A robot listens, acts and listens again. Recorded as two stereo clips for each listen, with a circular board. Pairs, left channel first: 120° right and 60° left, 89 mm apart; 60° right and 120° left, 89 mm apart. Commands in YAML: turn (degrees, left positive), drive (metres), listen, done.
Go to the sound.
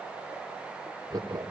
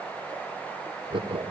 turn: 100
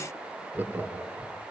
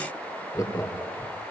turn: -10
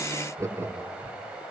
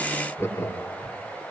drive: 1.0
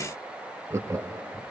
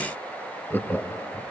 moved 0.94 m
drive: 1.0
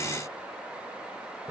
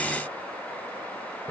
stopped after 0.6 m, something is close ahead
listen: true
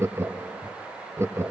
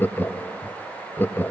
done: "I am next to the laughter."